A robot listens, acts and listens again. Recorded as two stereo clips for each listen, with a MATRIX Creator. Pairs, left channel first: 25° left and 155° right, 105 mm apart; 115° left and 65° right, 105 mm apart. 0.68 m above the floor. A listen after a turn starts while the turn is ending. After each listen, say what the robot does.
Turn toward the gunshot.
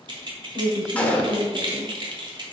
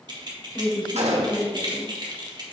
Turn 55° right.
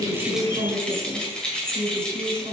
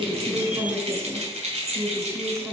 I heard a gunshot from this way, but can't make it out now.